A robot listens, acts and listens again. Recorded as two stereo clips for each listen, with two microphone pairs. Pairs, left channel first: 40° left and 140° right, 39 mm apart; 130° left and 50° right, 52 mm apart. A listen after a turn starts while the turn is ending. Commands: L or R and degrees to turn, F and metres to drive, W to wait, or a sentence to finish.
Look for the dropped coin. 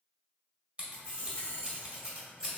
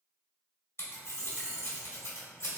R20
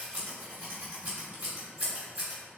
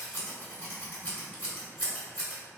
I heard a dropped coin from this way, but can't make it out now.